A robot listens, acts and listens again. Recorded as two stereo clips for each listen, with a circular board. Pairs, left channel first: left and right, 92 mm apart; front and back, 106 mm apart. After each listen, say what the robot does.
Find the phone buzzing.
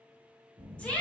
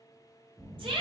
Turn 90° right.
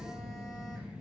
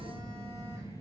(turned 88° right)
Facing the phone buzzing, 1 to 2 m away.